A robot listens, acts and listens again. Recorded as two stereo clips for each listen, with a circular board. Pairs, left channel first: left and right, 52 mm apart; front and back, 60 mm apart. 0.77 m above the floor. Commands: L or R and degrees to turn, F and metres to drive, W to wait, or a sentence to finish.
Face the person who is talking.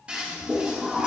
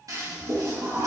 W
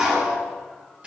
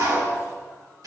W
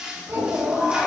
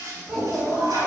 R105
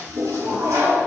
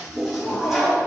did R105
W
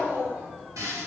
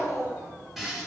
R35
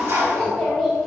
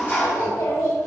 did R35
Facing the child speaking.